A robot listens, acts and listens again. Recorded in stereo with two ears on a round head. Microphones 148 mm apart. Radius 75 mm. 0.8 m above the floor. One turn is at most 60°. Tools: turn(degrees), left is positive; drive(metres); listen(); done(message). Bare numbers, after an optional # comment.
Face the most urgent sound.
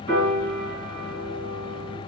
listen()
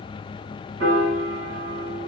listen()
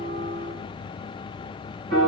done("I can't make out anything urgent, only a piano.")